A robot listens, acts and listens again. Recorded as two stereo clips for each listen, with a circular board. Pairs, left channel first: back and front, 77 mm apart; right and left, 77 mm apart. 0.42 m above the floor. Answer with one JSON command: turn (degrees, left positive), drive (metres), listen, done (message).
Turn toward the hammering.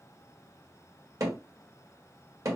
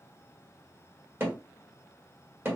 {"turn": 35}
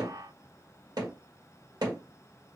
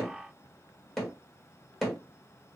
{"done": "Facing the hammering."}